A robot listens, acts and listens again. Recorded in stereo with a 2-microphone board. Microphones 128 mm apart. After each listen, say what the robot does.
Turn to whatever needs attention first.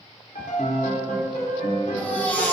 Turn 30° left.
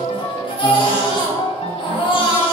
Turn 135° left.
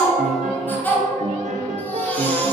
Turn 15° left.
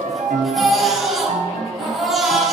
Found it: a baby crying, straight ahead.